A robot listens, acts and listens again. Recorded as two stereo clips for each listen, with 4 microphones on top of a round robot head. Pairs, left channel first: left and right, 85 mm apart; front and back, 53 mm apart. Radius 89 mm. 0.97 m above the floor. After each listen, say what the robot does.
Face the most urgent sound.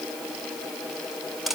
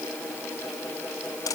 Keep listening.
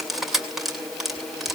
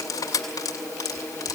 Keep listening.
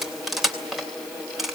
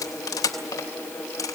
I can't make out anything urgent to turn to.